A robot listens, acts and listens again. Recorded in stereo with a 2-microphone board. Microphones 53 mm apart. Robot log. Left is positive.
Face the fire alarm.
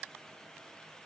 cmd idle
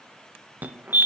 note: The fire alarm: about 30° right or 150° right.
cmd yaw -30
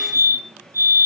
note: So it is at 115° right.
cmd yaw -115
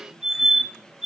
end: Found it: a fire alarm, straight ahead, 2 to 4 m away.